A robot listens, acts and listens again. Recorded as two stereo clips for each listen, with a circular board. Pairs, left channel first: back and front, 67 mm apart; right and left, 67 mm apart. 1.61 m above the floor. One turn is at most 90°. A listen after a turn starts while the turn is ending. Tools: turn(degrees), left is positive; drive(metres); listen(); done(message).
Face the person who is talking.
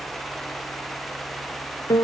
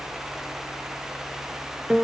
listen()
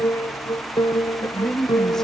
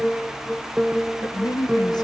turn(degrees=-90)
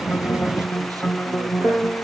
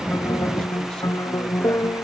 listen()
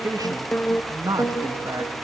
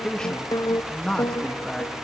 turn(degrees=-10)
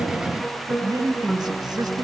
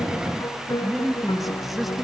done("Found it: a man speaking, straight ahead, 2 to 4 m away.")